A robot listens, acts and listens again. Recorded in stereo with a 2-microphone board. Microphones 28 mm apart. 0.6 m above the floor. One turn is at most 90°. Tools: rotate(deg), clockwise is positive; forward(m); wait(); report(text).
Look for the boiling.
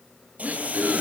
rotate(60)
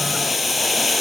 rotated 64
report("Found it: boiling, straight ahead.")